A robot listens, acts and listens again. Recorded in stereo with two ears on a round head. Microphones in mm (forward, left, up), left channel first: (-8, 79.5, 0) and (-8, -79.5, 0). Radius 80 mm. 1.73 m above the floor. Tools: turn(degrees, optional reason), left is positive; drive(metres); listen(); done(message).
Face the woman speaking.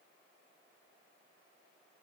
listen()
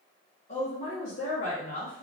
turn(degrees=50, reason="The woman speaking: about 50° left or 130° left.")
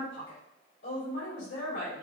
turn(degrees=65, reason="So it is at 65° left.")
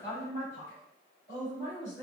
turn(degrees=25, reason="The woman speaking is now 25° left.")
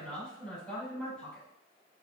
turn(degrees=10, reason="The woman speaking is now 10° left.")
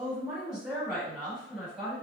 done("Found it: a woman speaking, straight ahead, 2 to 4 m away.")